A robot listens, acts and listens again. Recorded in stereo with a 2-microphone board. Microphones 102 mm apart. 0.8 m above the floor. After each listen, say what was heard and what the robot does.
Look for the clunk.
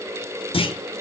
The clunk: about 60° left or 120° left. Turn 60° left.
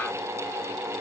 Keep listening.
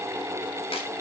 I heard a clunk, but can't make it out now. It was about straight ahead or 60° left.